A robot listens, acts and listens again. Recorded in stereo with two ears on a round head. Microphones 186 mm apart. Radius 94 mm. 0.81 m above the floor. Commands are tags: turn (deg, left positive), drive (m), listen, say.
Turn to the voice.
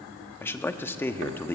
<turn deg="30"/>
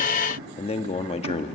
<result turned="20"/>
<turn deg="145"/>
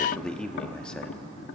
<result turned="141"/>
<say>Facing the man speaking, 1 to 2 m away.</say>